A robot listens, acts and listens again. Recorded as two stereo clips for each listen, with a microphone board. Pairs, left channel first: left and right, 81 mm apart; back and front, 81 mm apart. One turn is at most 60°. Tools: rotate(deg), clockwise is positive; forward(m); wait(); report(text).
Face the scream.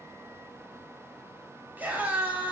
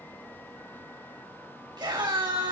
rotate(20)
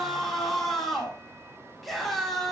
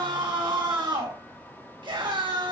report("Found it: a scream, straight ahead.")